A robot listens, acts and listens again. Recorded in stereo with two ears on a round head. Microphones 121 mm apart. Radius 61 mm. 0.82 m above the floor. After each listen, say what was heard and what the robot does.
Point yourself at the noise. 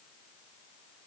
Keep listening.
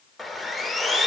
Turn 30° left.
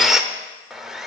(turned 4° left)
Turn 30° right.
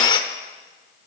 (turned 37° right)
So it is at 35° left. Turn 35° left.
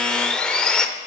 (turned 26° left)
Found it: sawing, straight ahead, under 1 m away.